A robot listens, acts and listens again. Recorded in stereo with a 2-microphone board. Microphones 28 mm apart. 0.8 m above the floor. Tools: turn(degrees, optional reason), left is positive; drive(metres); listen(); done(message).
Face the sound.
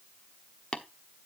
turn(degrees=30, reason="The tapping: about 30° left or 150° left.")
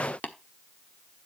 turn(degrees=120, reason="So it is at 120° left.")
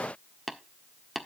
done("Found it: tapping, straight ahead.")